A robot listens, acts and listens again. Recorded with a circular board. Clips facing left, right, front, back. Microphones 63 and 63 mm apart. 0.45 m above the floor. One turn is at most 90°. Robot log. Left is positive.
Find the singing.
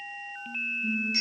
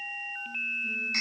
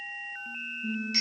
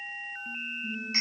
note: The singing: 15° left.
cmd yaw +15
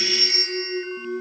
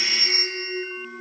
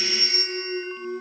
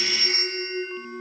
end: Found it: singing, straight ahead, over 4 m away.